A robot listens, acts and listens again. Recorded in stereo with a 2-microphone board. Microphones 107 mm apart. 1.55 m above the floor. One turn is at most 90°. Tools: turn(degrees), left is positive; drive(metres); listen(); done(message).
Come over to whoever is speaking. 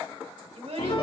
turn(degrees=-90)
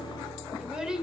drive(metres=1.0)
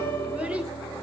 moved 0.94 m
listen()
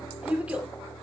turn(degrees=-10)
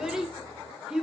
drive(metres=1.0)
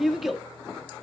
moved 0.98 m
drive(metres=1.0)
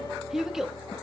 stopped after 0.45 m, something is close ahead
done("Arrived at the child speaking, straight ahead.")